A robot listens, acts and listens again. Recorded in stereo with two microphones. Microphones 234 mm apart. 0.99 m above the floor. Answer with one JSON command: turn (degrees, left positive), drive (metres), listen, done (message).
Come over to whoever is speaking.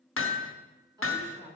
{"turn": -15}
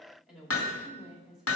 {"drive": 1.0}
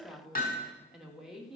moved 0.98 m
{"drive": 1.0}
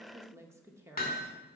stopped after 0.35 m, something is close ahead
{"turn": -10}
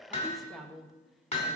{"done": "I am next to the woman speaking."}